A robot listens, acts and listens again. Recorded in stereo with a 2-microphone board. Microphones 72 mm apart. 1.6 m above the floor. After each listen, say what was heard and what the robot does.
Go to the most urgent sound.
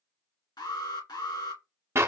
Turn 90° left.
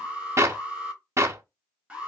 So it is at 15° right. Turn 15° right.
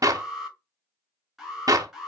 Drive 1.0 m forward.
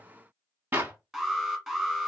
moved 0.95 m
Drive 1.0 m forward.
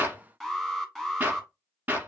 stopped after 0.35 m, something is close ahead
Arrived at the alarm, straight ahead.